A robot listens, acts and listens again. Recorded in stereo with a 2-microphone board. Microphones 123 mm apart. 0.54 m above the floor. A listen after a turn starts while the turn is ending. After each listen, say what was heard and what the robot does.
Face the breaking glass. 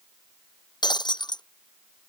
The breaking glass: about 35° left or 145° left. Turn 35° left.
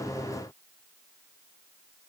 Keep listening.
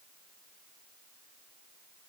I heard breaking glass, but can't make it out now. It was about straight ahead or 110° left.